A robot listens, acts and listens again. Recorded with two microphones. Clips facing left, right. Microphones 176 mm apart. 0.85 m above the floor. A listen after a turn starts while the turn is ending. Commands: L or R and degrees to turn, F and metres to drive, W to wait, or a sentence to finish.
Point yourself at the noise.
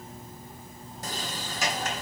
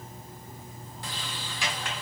L40
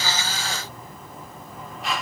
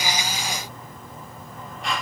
Facing the sliding door.